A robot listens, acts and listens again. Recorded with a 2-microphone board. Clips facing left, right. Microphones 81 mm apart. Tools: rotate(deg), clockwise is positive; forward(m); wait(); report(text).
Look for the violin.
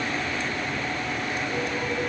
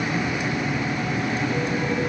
wait()
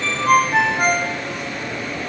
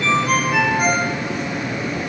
wait()
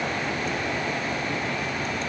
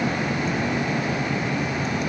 report("I can't make out a violin to turn to.")